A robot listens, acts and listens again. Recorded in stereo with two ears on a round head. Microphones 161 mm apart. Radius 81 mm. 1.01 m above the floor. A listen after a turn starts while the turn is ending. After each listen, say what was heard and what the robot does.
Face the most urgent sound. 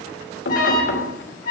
The alarm: about 50° left or 130° left. Turn 50° left.
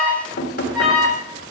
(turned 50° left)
Facing the alarm.